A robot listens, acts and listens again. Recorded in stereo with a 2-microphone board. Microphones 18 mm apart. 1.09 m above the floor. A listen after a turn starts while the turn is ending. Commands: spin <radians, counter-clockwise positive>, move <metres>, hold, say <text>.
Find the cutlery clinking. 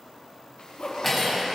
spin 0.52
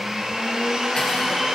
hold
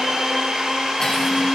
hold
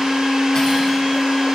say I heard cutlery clinking, but can't make it out now. It was about 25° right or 145° left.